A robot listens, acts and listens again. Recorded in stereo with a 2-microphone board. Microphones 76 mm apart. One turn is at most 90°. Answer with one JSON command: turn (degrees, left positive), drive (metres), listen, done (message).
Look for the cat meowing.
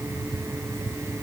{"listen": true}
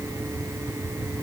{"listen": true}
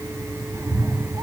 {"turn": -50}
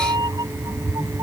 {"turn": -70}
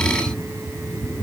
{"turn": 10}
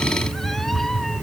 {"done": "Facing the cat meowing."}